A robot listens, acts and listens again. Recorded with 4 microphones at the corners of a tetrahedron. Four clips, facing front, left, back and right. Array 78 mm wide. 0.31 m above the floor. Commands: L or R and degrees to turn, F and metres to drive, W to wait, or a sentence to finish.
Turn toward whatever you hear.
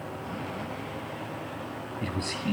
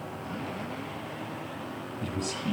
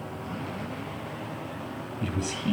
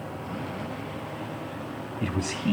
R70
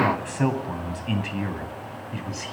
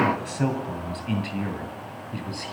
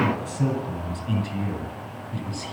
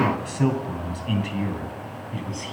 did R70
L30
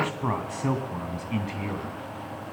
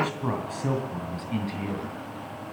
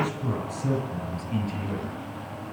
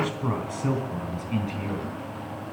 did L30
L15
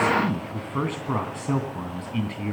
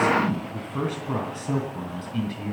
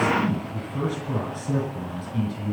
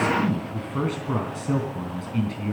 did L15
Facing the man speaking, 2 to 4 m away.